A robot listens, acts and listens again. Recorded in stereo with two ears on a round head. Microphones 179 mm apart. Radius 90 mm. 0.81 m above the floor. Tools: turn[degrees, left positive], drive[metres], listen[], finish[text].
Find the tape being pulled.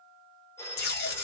Thought: The tape being pulled: about 50° left or 130° left.
Action: turn[50]
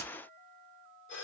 Action: listen[]
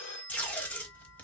Thought: So it is at 10° left.
Action: turn[10]
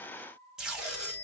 Action: finish[Facing the tape being pulled.]